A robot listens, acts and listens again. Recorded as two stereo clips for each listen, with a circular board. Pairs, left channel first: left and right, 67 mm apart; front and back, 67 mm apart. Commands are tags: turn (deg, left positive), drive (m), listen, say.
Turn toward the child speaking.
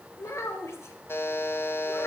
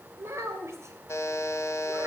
<turn deg="135"/>
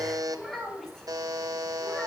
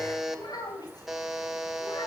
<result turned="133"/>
<say>Facing the child speaking, 2 to 4 m away.</say>